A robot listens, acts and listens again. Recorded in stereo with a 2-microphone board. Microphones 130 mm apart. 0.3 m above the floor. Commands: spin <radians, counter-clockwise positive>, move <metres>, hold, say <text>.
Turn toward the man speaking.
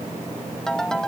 hold
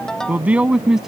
spin -0.52
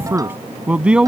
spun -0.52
spin -0.52
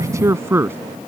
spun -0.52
spin -2.88
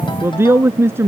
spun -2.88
spin -0.35
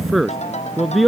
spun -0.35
say Found it: a man speaking, straight ahead.